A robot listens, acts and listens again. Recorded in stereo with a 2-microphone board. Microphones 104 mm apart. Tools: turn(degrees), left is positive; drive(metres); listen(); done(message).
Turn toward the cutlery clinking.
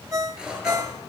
turn(degrees=-30)
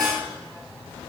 listen()
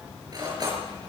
turn(degrees=-140)
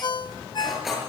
done("Found it: cutlery clinking, straight ahead.")